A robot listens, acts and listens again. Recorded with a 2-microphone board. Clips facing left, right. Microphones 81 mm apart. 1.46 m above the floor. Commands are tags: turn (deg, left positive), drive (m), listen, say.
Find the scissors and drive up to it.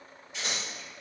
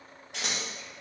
<turn deg="-90"/>
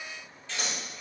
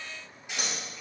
<turn deg="-15"/>
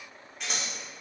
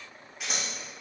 <drive m="1.0"/>
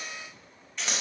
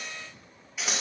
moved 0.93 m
<drive m="1.0"/>
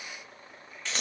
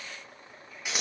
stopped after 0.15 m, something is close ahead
<turn deg="-10"/>
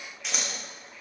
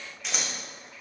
<say>Arrived at the scissors, straight ahead.</say>